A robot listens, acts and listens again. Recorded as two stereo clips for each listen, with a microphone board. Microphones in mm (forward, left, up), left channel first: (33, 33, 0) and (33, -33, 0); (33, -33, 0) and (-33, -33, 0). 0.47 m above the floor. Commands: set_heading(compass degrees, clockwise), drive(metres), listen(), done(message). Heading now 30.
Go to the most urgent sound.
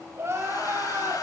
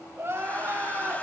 set_heading(165)
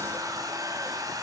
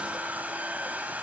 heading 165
listen()
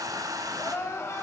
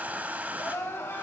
set_heading(115)
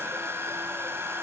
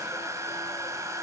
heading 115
listen()
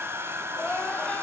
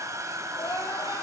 set_heading(95)
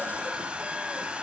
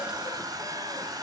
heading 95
listen()
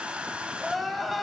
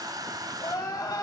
drive(1.0)
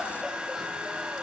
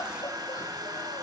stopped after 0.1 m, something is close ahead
done("Something is in my way. I am facing the crying but have not reached it.")